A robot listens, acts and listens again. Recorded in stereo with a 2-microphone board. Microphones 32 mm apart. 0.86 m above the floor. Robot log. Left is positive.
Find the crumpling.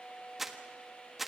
cmd yaw -30
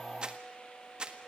note: So it is at 145° right.
cmd yaw -145
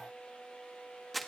end: Found it: crumpling, straight ahead, 1 to 2 m away.